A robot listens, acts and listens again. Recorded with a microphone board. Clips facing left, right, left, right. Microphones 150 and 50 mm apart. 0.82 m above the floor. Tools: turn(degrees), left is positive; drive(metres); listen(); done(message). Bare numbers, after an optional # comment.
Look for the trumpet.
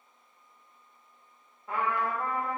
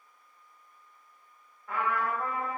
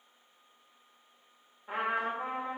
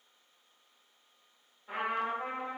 # The trumpet: about 20° left or 160° left.
turn(20)
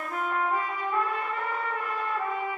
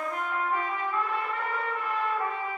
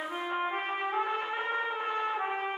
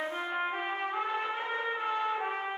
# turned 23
# So it is at 135° left.
turn(135)
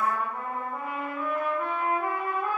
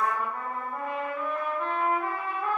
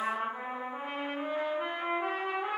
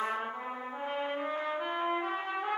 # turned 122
# The trumpet is now 10° left.
turn(10)
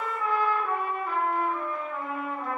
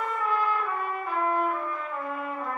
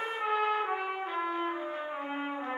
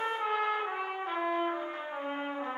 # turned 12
done("Found it: a trumpet, straight ahead.")